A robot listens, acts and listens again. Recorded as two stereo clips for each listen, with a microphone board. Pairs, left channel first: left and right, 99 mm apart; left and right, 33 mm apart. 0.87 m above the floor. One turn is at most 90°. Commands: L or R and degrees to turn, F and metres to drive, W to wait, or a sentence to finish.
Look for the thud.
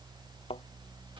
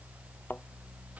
L70
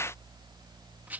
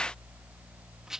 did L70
W
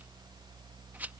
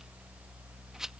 I heard a thud, but can't make it out now. It was about straight ahead or 40° left.